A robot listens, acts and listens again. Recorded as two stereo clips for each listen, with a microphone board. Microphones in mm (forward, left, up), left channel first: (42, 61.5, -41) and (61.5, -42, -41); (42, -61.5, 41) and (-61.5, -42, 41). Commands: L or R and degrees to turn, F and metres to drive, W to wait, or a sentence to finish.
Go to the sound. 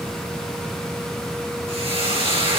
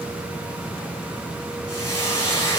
R65
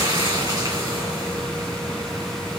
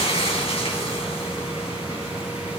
R30
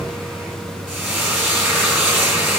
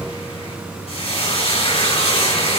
F1.0
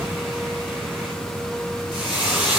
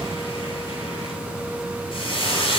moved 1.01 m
F1.0
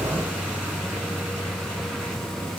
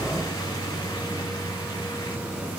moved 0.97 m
W
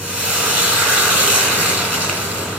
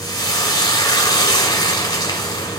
F1.0
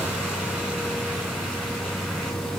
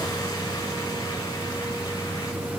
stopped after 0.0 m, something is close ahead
W
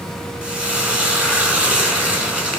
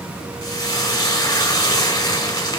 Arrived at the frying, straight ahead.